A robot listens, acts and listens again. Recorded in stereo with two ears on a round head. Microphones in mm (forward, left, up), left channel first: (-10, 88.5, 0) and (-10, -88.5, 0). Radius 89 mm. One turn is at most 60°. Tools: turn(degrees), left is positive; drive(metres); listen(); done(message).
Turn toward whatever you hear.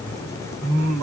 turn(degrees=-60)
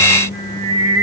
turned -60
turn(degrees=-45)
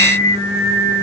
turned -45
turn(degrees=-20)
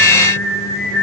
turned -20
done("Facing the singing.")